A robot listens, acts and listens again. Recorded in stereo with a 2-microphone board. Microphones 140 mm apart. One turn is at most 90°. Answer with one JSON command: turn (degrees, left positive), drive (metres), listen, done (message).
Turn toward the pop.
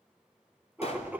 {"turn": 50}
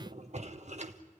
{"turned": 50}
{"listen": true}
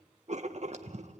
{"done": "I heard a pop, but can't make it out now. It was about straight ahead or 80° left."}